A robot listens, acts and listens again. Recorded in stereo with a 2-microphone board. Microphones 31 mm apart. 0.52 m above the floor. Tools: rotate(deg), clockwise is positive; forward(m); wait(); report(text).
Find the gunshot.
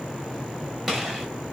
rotate(30)
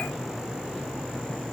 wait()
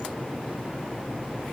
report("I heard a gunshot, but can't make it out now. It was about 25° left or 145° right.")